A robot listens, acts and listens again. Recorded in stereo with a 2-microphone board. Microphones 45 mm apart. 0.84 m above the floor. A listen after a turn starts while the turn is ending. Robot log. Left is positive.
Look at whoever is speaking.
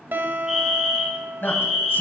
note: The man speaking: about 50° left or 130° left.
cmd yaw +50
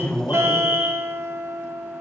cmd idle
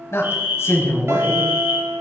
note: So it is at 75° left.
cmd yaw +75
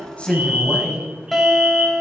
note: The man speaking is now 10° right.
cmd yaw -10
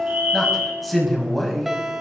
end: Found it: a man speaking, straight ahead.